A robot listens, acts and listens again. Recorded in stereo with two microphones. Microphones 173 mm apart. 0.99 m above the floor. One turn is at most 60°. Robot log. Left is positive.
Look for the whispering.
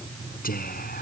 note: The whispering: about 55° left or 125° left.
cmd yaw +55
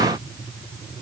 cmd idle
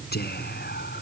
note: So it is at 65° left.
cmd yaw +60
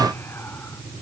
cmd idle
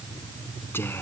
note: The whispering is now 15° left.
cmd yaw +15
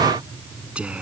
end: Facing the whispering.